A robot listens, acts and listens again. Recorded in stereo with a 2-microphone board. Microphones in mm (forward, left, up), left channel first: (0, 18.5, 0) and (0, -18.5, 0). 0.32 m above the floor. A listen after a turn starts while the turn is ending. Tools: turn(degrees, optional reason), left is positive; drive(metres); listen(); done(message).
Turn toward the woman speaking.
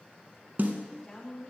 turn(degrees=15, reason="The woman speaking: about 15° left or 165° left.")
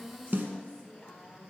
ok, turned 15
turn(degrees=30, reason="The woman speaking: about 30° left or 150° left.")
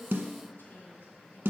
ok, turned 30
turn(degrees=120, reason="So it is at 120° left.")
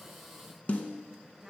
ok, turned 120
turn(degrees=-10, reason="The woman speaking is now 10° right.")
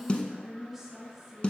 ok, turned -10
done("Facing the woman speaking, 2 to 4 m away.")